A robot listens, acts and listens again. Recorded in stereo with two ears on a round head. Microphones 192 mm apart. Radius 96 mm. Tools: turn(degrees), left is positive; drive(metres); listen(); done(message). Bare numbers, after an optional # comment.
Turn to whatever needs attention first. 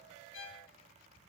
listen()
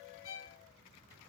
listen()
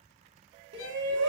# The shout: about 60° right or 120° right.
turn(-60)
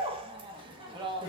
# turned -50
# So it is at 25° right.
turn(-25)
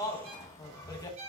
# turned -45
# The shout is now 20° left.
turn(20)
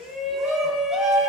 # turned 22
done("Facing the shout.")